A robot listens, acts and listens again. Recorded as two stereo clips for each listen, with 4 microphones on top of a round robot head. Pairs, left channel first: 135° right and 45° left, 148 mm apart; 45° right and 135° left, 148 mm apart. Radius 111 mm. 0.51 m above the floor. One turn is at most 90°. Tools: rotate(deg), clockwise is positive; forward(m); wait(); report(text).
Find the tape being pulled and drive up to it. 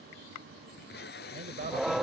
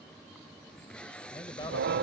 rotate(90)
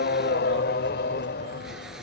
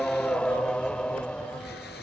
rotate(40)
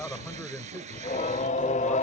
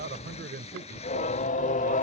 forward(1.0)
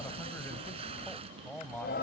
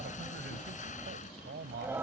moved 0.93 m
forward(1.0)
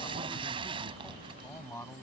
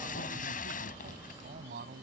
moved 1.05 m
rotate(10)
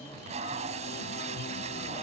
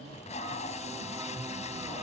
forward(1.0)
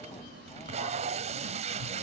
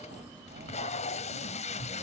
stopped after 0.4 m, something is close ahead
report("I am next to the tape being pulled.")